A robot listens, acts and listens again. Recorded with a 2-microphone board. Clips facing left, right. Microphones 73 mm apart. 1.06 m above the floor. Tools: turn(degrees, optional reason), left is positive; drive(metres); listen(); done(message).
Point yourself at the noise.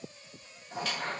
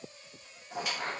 turn(degrees=-30)
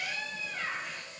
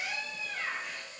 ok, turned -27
turn(degrees=15, reason="So it is at 15° left.")
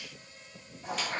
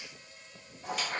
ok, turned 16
done("Found it: a squeak, straight ahead, under 1 m away.")